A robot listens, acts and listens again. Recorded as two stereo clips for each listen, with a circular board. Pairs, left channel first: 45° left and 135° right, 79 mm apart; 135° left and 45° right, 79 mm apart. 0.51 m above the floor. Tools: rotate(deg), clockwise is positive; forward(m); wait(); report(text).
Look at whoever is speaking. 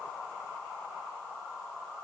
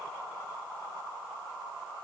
wait()
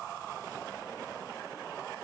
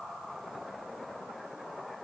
wait()
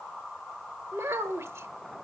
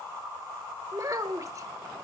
rotate(85)
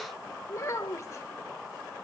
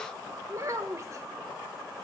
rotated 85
report("Found it: a child speaking, straight ahead.")